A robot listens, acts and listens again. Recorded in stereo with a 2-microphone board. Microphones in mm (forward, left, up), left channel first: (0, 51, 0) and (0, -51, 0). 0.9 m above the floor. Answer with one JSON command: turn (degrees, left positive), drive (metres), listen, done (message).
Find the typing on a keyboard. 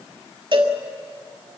{"listen": true}
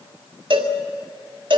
{"listen": true}
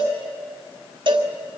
{"done": "I can't make out typing on a keyboard to turn to."}